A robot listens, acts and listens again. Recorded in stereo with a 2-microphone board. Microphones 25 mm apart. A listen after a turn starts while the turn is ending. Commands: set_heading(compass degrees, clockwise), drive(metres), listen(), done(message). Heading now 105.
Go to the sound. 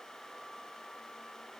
listen()
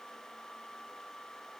listen()
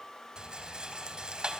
set_heading(145)
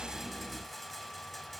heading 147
drive(1.0)
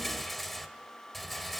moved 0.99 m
drive(1.0)
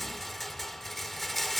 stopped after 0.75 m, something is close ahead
done("I am next to the rattle.")